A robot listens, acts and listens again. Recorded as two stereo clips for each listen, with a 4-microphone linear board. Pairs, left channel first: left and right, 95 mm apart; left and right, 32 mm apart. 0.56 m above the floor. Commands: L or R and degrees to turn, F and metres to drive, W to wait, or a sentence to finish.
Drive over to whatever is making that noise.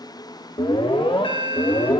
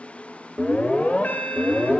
L65
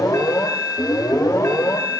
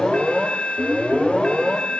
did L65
L35
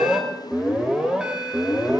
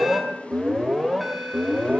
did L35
R10
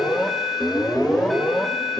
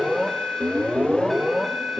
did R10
F1.0
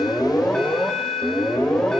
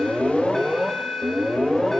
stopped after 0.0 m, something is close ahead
L10
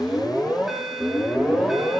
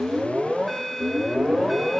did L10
Blocked. The alarm is further on, straight ahead.